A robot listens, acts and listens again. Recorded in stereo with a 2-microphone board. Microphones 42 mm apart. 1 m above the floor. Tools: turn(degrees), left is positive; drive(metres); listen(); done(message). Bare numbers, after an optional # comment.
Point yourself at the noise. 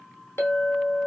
turn(90)
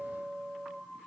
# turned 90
# So it is at 10° right.
turn(-10)
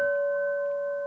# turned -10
done("Facing the clink.")